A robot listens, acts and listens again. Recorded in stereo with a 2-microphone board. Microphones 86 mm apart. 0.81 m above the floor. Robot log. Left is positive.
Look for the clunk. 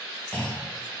note: The clunk: about 15° left or 165° left.
cmd yaw +15
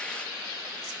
cmd idle
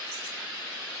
end: I heard a clunk, but can't make it out now. It was about straight ahead or 150° left.